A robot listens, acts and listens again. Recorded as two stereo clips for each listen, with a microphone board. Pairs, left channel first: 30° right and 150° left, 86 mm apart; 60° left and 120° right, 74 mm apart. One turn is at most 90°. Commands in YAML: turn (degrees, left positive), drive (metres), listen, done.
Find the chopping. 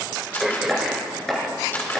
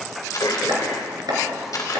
turn: -90
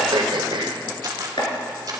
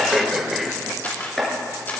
turn: -25
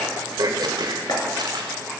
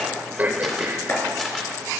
done: "Found it: chopping, straight ahead, 2 to 4 m away."